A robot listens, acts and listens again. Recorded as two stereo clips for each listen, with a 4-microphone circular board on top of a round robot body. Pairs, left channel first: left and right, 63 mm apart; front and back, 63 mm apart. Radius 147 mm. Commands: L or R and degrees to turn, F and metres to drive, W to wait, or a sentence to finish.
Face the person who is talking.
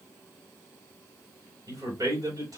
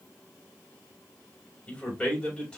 R70
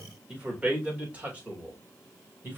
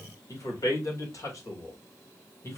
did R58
R30
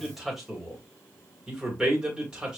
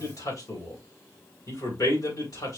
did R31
R10
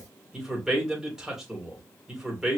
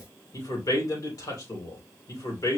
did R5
R10
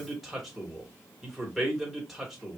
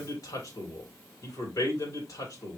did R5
Found it: a man speaking, straight ahead, 2 to 4 m away.